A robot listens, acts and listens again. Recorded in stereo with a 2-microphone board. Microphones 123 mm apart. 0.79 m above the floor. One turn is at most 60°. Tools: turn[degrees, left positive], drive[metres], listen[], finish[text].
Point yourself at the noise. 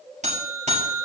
Thought: The buzzer: about 70° right or 110° right.
Action: turn[-60]
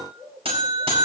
Thought: So it is at 50° right.
Action: turn[-50]
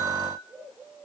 Action: finish[Found it: a buzzer, straight ahead.]